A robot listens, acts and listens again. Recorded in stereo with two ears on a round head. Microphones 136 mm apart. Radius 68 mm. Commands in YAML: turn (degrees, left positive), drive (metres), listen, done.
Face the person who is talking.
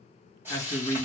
turn: 15
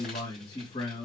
turn: 145
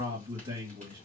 turn: -20
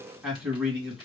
done: "Found it: a man speaking, straight ahead."